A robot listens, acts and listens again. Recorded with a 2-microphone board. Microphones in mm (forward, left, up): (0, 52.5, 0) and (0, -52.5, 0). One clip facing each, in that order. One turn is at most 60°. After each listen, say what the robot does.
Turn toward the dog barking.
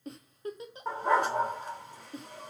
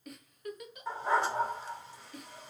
Turn 50° left.
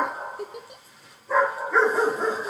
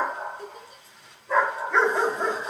Found it: a dog barking, straight ahead, 2 to 4 m away.